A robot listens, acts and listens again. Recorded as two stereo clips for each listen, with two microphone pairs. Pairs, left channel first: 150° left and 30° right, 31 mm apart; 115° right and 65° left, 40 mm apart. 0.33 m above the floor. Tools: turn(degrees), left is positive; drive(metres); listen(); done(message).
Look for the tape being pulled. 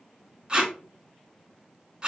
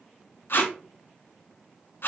turn(degrees=-95)
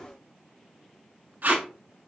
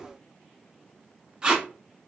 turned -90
done("Facing the tape being pulled, under 1 m away.")